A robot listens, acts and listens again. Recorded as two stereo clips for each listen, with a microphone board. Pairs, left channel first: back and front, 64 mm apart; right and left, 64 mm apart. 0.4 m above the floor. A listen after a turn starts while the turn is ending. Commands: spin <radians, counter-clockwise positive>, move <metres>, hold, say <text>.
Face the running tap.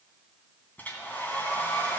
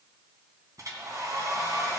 hold
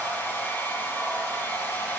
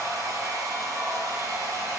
hold
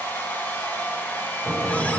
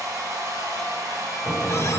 spin -2.09
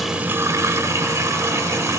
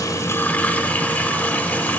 spin -0.52
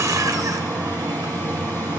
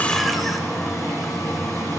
say Facing the running tap, under 1 m away.